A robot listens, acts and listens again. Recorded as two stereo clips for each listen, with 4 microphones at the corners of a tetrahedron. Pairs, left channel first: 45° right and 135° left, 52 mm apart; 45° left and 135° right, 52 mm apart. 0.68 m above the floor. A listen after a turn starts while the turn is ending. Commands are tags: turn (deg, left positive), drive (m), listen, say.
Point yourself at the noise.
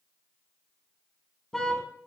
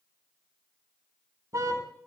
<turn deg="-125"/>
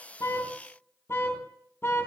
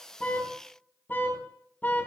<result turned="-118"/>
<turn deg="-10"/>
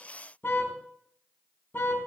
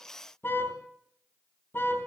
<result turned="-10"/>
<say>Found it: a car horn, straight ahead.</say>